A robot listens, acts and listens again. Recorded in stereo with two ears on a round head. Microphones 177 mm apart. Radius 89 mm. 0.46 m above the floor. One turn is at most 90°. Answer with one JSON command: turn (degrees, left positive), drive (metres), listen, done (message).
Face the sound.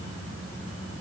{"listen": true}
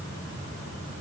{"listen": true}
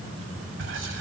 {"turn": -70}
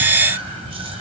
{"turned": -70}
{"turn": -30}
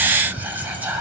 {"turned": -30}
{"turn": -10}
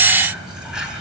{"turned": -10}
{"done": "Facing the whispering, 2 to 4 m away."}